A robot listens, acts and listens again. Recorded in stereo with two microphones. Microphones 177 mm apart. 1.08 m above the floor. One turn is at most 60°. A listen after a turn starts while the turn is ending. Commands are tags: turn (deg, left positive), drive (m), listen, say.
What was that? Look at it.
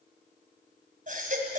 <turn deg="-50"/>
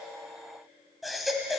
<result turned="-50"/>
<say>Facing the baby crying, 2 to 4 m away.</say>